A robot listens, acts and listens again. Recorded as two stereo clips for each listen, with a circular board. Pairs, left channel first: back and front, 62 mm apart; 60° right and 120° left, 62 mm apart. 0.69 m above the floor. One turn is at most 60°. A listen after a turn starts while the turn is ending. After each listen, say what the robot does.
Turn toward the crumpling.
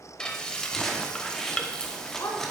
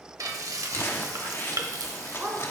Turn 60° right.
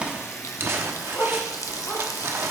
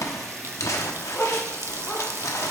Turn 40° right.
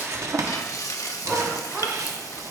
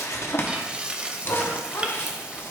Turn 10° right.
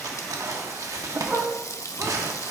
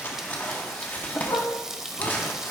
Found it: crumpling, straight ahead.